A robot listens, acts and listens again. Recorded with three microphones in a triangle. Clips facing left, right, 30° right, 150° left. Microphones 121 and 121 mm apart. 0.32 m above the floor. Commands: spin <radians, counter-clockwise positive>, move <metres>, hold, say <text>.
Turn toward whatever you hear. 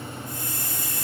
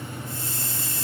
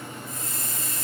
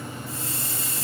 spin -2.62
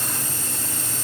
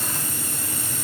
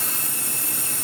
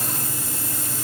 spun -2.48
spin -0.17
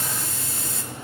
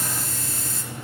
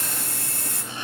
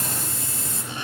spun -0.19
say Found it: a hiss, straight ahead, over 4 m away.